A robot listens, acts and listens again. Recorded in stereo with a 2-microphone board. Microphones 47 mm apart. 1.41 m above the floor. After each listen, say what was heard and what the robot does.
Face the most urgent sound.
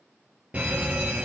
The fire alarm: about 30° right or 150° right. Turn 30° right.
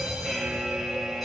Facing the fire alarm, 2 to 4 m away.